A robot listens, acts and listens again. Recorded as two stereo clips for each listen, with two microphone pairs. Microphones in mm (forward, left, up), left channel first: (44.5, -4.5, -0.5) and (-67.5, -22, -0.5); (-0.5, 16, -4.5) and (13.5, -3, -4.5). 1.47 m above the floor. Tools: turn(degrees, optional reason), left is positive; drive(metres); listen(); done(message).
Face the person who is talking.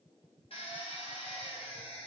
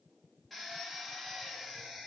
listen()
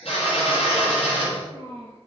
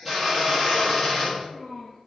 turn(degrees=180, reason="The child speaking: straight behind.")
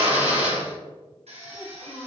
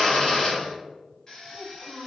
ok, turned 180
turn(degrees=-30, reason="The child speaking is now 30° right.")
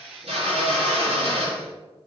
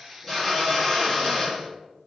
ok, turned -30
listen()
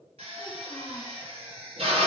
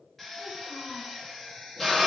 listen()
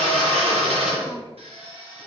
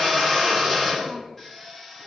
done("Facing where the child speaking came from. I can't hear it now.")